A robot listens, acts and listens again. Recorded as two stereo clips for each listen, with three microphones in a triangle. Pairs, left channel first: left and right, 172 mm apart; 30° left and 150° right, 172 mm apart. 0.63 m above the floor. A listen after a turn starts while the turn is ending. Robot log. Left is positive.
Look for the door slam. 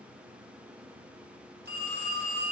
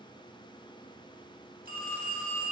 cmd idle
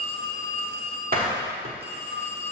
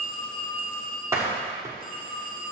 note: The door slam: 75° right.
cmd yaw -75
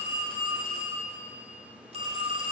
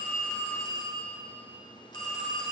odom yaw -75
end: Facing where the door slam came from. I can't hear it now.